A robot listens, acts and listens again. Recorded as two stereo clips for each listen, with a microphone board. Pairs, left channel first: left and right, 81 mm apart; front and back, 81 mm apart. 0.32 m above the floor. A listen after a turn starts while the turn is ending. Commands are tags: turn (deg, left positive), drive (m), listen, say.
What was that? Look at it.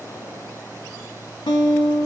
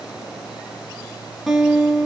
<turn deg="95"/>
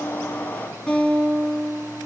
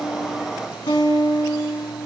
<turn deg="10"/>
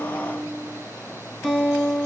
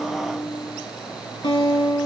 <say>Facing the guitar, under 1 m away.</say>